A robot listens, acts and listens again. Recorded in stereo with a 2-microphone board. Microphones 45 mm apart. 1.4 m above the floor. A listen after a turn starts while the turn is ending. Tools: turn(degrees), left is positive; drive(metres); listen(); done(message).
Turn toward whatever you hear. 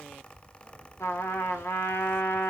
turn(degrees=90)
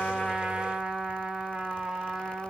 turn(degrees=-15)
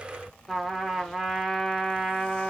done("Facing the trumpet.")